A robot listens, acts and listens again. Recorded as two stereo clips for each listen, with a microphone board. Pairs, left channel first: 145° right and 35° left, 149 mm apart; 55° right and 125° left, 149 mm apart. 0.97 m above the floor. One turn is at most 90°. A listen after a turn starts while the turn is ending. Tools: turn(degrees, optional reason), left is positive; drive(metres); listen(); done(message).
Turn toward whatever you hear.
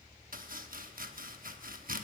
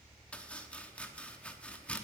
turn(degrees=25, reason="The chopping: 25° left.")
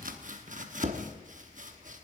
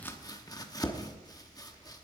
turn(degrees=10, reason="The chopping is now 10° left.")
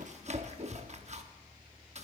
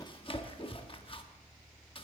done("Facing the chopping, under 1 m away.")